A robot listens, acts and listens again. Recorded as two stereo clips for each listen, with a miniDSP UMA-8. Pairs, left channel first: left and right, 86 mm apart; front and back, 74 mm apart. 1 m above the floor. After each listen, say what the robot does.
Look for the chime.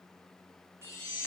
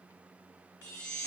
Turn 35° right.
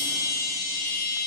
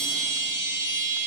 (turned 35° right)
Found it: a chime, straight ahead.